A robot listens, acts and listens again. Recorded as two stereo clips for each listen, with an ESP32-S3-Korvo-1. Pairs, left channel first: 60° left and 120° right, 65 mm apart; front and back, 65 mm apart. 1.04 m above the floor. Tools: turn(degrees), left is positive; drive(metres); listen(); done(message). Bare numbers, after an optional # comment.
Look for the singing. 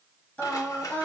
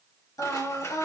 done("Found it: singing, straight ahead, 1 to 2 m away.")